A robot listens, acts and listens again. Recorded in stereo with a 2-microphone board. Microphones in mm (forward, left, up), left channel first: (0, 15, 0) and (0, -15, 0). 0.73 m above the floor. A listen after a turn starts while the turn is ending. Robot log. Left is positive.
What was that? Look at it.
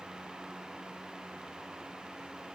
cmd idle
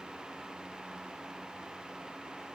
cmd idle
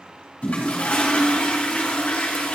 note: The toilet flushing: about 50° left or 130° left.
cmd yaw +50
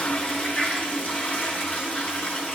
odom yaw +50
note: So it is at 75° left.
cmd yaw +75
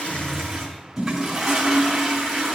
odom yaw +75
end: Facing the toilet flushing, 2 to 4 m away.